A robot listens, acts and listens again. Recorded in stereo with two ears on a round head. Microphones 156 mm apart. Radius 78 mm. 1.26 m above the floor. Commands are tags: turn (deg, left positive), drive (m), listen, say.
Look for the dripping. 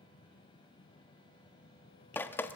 <turn deg="30"/>
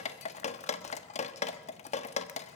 <turn deg="135"/>
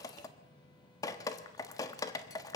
<turn deg="20"/>
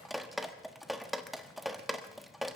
<say>Found it: dripping, straight ahead.</say>